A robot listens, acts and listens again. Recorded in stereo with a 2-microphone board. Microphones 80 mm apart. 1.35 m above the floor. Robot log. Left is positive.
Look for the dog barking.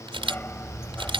cmd yaw +30
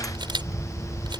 note: So it is at 155° left.
cmd yaw +155
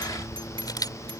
note: The dog barking is now 50° left.
cmd yaw +50
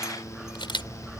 end: Found it: a dog barking, straight ahead.